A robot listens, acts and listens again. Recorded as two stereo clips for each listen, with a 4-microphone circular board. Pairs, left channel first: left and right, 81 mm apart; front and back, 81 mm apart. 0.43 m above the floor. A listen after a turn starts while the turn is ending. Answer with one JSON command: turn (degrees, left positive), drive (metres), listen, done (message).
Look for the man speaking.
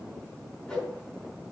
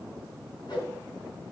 {"listen": true}
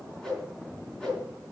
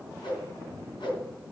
{"listen": true}
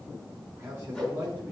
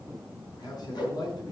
{"turn": -30}
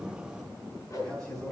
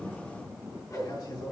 {"turn": 10}
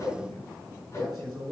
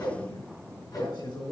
{"done": "Facing the man speaking, over 4 m away."}